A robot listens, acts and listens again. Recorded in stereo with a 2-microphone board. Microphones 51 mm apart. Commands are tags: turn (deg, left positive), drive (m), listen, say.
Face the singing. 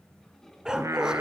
<turn deg="-90"/>
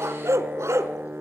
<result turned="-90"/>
<turn deg="-50"/>
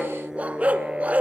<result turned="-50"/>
<turn deg="-20"/>
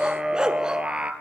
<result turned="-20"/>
<turn deg="-25"/>
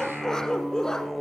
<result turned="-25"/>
<say>Facing the singing.</say>